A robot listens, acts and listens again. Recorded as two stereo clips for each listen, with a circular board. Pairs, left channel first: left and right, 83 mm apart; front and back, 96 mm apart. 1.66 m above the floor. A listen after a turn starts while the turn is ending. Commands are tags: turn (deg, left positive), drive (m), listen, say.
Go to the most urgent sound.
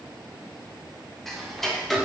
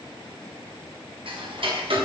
<listen/>
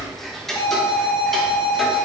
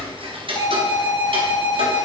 <turn deg="50"/>
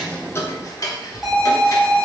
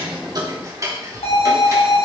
<drive m="1.0"/>
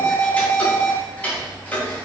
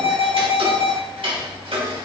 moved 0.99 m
<drive m="1.0"/>
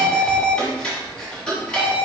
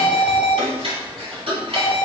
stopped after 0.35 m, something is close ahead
<say>I am next to the alarm.</say>